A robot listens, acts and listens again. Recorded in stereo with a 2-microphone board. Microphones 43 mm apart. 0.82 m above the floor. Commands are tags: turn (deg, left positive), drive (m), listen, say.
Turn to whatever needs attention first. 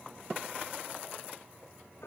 <listen/>
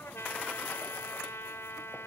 <listen/>
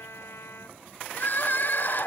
<turn deg="45"/>
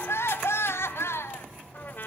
<turn deg="90"/>
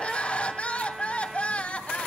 <turn deg="30"/>
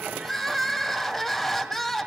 <turn deg="10"/>
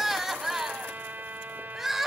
<say>Found it: crying, straight ahead.</say>